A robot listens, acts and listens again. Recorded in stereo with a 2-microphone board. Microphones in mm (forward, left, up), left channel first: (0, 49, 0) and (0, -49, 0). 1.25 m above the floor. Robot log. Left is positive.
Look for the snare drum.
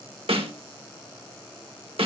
note: The snare drum: about 70° right or 110° right.
cmd yaw -70
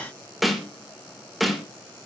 end: Facing the snare drum.